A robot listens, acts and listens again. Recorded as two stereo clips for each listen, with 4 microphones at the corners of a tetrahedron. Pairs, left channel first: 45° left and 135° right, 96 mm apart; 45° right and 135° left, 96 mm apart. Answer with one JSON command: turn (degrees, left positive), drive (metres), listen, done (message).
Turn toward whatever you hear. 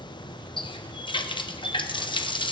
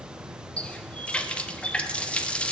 {"turn": 30}
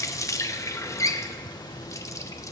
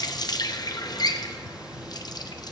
{"done": "Found it: a running tap, straight ahead."}